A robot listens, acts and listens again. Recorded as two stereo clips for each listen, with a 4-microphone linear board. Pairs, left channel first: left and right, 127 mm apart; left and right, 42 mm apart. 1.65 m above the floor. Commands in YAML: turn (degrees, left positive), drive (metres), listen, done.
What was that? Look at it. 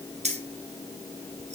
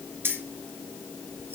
turn: -65
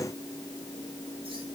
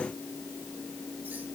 listen: true
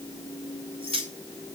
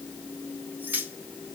turn: -45
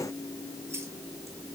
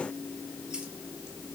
listen: true
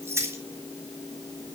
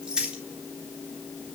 turn: -20
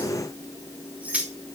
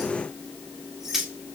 turn: -10
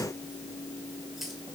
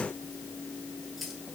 listen: true
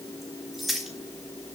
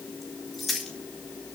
done: "Facing the keys jangling."